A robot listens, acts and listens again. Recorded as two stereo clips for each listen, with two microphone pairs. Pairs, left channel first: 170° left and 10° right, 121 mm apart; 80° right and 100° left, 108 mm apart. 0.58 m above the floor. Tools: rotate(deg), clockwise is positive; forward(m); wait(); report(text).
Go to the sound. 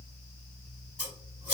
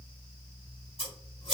rotate(75)
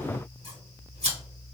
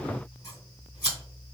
rotate(30)
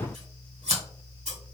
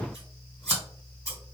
rotate(20)
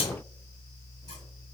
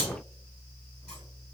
wait()
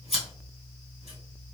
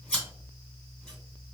forward(1.0)
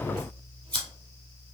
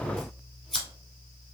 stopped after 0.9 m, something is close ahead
rotate(-10)
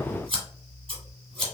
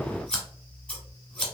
report("I am next to the scissors.")